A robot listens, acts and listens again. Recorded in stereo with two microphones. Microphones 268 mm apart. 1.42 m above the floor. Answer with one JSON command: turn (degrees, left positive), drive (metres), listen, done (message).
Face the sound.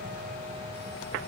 {"listen": true}
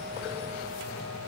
{"listen": true}
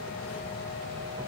{"done": "I can't make out anything."}